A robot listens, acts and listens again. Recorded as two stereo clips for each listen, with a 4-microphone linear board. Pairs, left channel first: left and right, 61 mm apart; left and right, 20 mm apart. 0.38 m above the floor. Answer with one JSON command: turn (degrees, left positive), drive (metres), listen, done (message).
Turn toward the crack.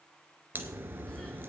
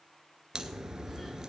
{"turn": -35}
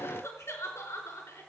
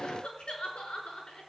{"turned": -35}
{"listen": true}
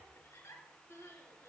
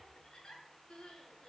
{"done": "I heard a crack, but can't make it out now. It was about straight ahead or 110° right."}